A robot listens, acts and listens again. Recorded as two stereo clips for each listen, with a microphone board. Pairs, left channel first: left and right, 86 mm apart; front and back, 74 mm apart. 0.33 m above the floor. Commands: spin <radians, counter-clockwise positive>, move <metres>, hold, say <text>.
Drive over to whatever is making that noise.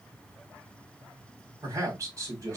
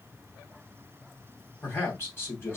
spin -0.87
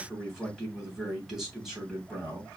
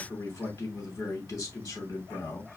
move 1.0
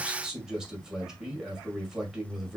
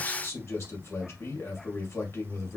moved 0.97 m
spin -0.26
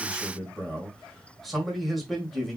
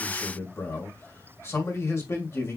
move 1.0
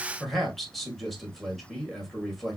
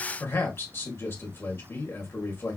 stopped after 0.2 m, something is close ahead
say Arrived at the man speaking, straight ahead.